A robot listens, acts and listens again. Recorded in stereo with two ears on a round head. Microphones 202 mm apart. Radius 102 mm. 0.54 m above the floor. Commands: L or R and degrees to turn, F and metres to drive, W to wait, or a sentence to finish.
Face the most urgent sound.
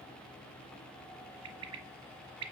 W
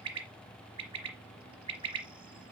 W
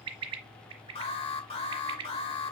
L30
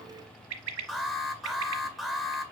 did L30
Found it: an alarm, straight ahead.